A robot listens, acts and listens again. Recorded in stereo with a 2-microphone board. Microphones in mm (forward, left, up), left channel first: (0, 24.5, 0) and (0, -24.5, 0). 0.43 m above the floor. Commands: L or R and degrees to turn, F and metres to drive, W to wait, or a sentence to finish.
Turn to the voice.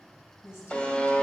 L60
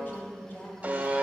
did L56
L50
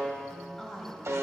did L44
Facing the woman speaking, 2 to 4 m away.